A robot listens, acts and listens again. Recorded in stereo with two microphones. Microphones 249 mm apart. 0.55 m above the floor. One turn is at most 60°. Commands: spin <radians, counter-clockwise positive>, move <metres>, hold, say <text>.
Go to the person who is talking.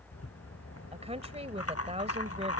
spin -0.44
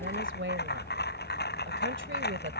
spin -1.05
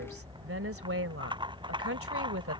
spin -1.05
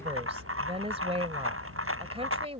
spin -0.44
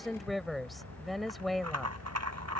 move 1.0
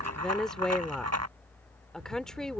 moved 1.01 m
move 1.0
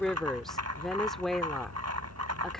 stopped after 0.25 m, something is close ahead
say I am next to the woman speaking.